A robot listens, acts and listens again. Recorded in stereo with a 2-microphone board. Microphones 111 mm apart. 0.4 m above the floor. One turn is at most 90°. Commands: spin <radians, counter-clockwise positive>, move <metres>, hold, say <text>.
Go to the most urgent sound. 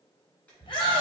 spin 0.87
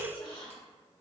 hold
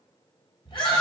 spin 1.22
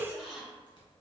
hold
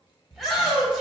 move 1.0
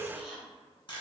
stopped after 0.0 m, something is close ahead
hold
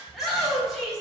say Something is in my way. I am facing the shout but have not reached it.